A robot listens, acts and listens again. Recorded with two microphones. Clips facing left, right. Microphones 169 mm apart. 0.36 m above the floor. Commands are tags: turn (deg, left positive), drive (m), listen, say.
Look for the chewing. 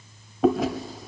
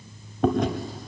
<turn deg="30"/>
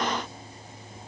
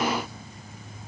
<listen/>
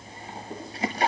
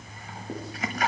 <turn deg="145"/>
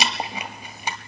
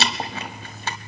<turn deg="15"/>
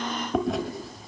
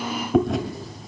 <say>Found it: chewing, straight ahead, 1 to 2 m away.</say>